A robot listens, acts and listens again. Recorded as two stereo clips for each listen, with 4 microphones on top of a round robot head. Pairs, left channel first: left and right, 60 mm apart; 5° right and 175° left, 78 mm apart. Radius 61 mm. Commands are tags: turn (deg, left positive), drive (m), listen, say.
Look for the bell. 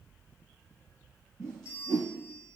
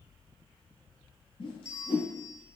<turn deg="40"/>
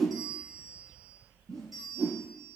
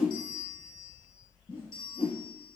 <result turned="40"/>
<say>Facing the bell, 1 to 2 m away.</say>